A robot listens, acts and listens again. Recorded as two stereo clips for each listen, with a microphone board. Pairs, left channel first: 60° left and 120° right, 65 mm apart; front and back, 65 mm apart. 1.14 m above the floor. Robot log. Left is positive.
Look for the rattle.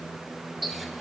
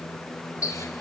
cmd idle
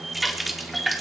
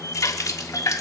cmd idle
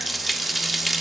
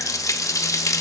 end: I can't make out a rattle, only a running tap.